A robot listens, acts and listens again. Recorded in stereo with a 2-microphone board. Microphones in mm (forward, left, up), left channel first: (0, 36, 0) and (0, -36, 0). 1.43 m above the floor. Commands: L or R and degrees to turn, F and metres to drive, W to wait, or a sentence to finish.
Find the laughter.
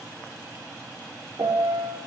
W
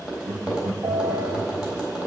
R90
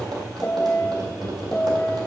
L30
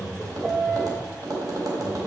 Facing the laughter.